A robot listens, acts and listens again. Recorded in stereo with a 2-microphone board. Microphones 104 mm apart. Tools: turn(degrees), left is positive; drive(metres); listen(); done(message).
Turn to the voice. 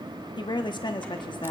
turn(degrees=50)
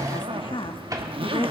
turn(degrees=70)
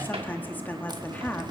turn(degrees=20)
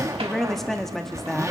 done("Found it: a woman speaking, straight ahead.")